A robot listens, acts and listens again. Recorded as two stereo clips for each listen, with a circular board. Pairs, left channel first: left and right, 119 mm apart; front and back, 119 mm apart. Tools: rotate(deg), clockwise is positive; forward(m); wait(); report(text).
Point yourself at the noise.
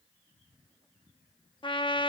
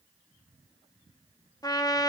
rotate(-55)
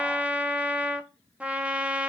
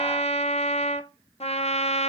rotate(10)
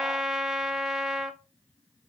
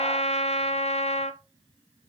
report("Facing the trumpet.")